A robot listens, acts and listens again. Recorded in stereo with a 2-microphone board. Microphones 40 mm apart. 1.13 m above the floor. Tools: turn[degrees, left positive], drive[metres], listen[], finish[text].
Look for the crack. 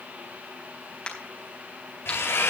Thought: The crack: about 30° left or 150° left.
Action: turn[30]
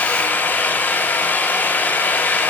Action: listen[]
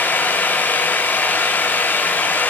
Action: finish[I heard a crack, but can't make it out now. It was about straight ahead or 120° left.]